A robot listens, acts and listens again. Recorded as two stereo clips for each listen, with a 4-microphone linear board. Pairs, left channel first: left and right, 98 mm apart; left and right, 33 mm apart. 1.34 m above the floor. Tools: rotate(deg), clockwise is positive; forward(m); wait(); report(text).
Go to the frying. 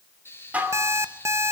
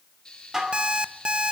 rotate(-25)
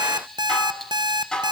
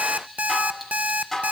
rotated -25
forward(1.0)
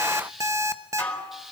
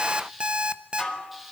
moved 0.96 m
forward(1.0)
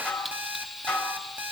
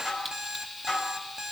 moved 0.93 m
forward(1.0)
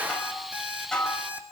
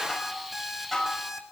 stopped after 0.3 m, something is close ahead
wait()
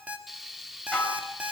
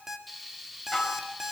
report("I am next to the frying.")